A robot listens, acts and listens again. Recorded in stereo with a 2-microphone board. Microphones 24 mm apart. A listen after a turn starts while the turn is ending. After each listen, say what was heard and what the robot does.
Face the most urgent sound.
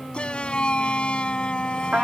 The shout: about 45° left or 135° left. Turn 45° left.
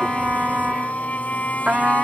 So it is at 90° left. Turn 90° left.
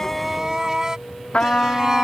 The shout is now 25° right. Turn 25° right.
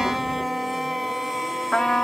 The shout is now 10° right. Turn 10° right.
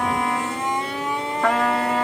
Facing the shout.